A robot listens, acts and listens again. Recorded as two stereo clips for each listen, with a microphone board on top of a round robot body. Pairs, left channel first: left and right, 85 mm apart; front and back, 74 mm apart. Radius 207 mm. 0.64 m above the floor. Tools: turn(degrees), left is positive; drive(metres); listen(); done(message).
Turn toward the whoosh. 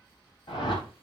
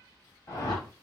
turn(degrees=55)
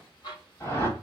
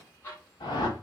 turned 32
turn(degrees=25)
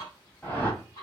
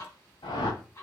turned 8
turn(degrees=15)
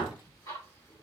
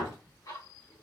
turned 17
done("Facing the whoosh.")